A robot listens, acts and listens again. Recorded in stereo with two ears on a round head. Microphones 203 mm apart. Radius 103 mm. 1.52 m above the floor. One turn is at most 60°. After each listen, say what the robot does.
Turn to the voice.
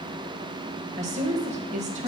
Turn 30° right.
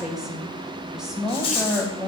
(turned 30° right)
Facing the woman speaking.